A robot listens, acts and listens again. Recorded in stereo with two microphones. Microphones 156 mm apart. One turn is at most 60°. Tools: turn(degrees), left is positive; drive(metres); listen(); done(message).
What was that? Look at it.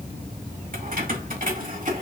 turn(degrees=-55)
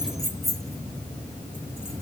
done("Found it: keys jangling, straight ahead, 1 to 2 m away.")